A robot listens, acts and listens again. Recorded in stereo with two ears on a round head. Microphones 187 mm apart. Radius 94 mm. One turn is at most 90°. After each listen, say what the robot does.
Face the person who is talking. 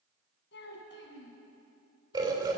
Turn 60° left.
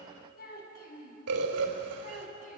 Turn 35° left.
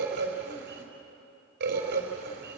Keep listening.
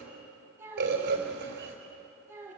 Turn 10° right.
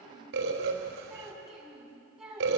Found it: a child speaking, straight ahead.